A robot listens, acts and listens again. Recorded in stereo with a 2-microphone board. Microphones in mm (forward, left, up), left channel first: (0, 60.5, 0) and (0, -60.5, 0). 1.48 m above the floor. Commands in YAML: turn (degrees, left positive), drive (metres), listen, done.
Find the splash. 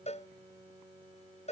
listen: true
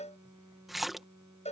turn: 30
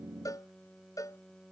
listen: true
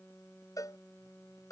done: "I heard a splash, but can't make it out now. It was about 30° right or 150° left."